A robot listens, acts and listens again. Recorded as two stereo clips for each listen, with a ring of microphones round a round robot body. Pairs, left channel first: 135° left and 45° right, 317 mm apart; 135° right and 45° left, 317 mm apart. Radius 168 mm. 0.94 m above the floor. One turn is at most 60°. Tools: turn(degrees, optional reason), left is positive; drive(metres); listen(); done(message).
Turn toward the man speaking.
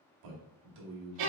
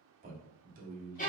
turn(degrees=-20, reason="The man speaking: 20° right.")
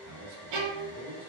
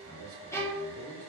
done("Facing the man speaking, 1 to 2 m away.")